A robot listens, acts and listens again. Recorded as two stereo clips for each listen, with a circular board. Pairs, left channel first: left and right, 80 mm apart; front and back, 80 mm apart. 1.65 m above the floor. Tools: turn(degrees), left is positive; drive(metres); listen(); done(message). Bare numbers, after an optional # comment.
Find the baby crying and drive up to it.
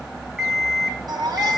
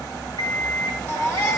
# The baby crying: 55° right.
turn(-55)
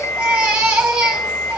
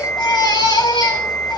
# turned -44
# The baby crying is now 15° right.
turn(-15)
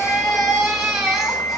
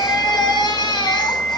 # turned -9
drive(1.0)
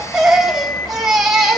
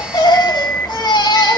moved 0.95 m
drive(1.0)
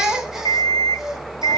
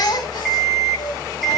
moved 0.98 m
drive(1.0)
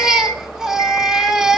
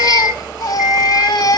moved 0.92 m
# The baby crying is now 10° right.
turn(-10)
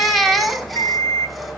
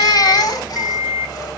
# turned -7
drive(1.0)
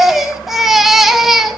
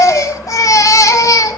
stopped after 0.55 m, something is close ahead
done("I am next to the baby crying.")